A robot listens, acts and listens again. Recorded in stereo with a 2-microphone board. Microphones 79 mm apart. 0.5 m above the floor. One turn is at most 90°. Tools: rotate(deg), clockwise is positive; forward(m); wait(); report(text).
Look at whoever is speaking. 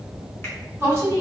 rotate(35)
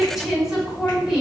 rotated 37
report("Facing the woman speaking.")